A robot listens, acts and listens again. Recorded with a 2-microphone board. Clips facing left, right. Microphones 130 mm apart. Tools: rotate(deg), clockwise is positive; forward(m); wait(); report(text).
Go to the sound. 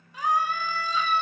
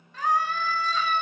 rotate(-30)
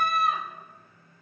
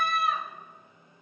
rotate(-140)
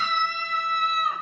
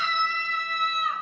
rotate(-40)
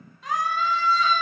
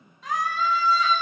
forward(1.0)
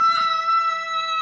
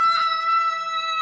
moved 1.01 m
forward(1.0)
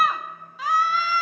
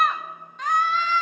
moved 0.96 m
forward(1.0)
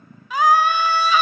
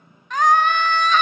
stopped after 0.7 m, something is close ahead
rotate(-10)
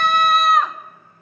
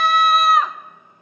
report("I am next to the scream.")